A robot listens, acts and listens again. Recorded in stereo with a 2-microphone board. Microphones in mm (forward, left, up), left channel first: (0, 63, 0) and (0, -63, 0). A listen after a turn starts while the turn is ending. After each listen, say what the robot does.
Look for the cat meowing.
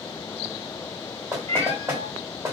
Turn 55° right.
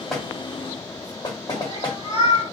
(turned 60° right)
Turn 50° right.
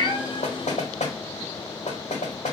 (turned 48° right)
Keep listening.
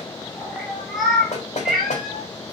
Facing the cat meowing.